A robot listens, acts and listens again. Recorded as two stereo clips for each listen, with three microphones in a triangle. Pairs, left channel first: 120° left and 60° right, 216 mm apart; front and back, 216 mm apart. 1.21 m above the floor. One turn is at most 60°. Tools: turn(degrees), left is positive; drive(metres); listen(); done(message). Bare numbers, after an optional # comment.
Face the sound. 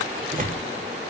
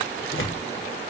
# The tearing paper: 10° right.
turn(-10)
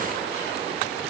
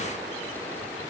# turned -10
listen()
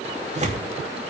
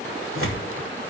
done("Found it: tearing paper, straight ahead.")